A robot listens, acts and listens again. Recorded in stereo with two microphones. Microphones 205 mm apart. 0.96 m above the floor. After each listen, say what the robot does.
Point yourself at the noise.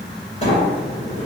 Turn 35° left.
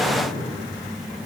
Keep listening.
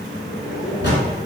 Turn 110° left.
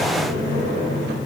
Turn 20° left.
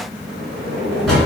Facing the sliding door.